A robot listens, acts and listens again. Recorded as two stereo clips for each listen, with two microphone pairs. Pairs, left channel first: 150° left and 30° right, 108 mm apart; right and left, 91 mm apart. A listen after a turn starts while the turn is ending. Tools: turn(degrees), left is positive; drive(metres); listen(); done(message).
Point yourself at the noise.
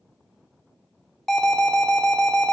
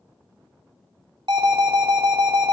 turn(degrees=65)
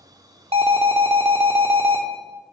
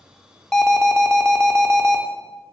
turn(degrees=-15)
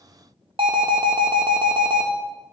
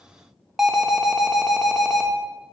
done("Facing the alarm, under 1 m away.")